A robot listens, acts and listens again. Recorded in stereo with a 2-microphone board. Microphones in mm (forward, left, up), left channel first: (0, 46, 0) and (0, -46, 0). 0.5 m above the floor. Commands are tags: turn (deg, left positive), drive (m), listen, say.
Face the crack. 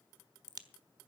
<turn deg="-45"/>
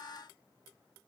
<listen/>
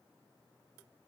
<say>I heard a crack, but can't make it out now. It was about straight ahead or 90° right.</say>